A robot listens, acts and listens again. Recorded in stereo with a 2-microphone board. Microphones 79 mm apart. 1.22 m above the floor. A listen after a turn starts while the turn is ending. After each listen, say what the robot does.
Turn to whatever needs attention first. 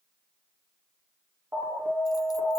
Turn 30° right.
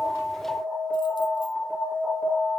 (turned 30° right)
Facing the alarm.